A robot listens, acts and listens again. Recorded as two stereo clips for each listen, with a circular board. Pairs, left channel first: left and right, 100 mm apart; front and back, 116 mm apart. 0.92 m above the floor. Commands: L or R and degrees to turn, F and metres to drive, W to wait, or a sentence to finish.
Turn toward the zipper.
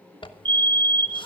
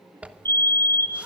L105
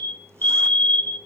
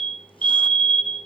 W
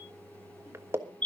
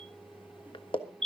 R30
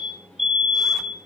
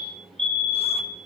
W
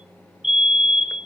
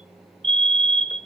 W
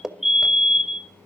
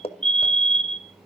Facing the zipper.